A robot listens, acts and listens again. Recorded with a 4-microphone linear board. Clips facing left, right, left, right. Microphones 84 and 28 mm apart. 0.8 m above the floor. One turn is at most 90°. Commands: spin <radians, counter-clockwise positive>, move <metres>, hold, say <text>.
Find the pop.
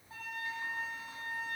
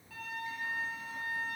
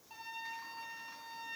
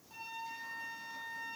hold
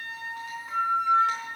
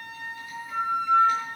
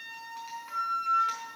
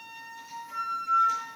hold
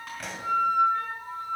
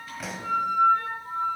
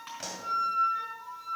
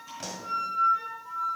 spin 0.52
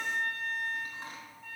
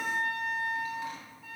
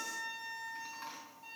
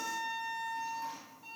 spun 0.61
hold
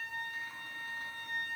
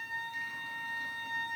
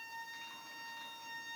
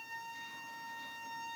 say I heard a pop, but can't make it out now. It was about 35° right or 145° left.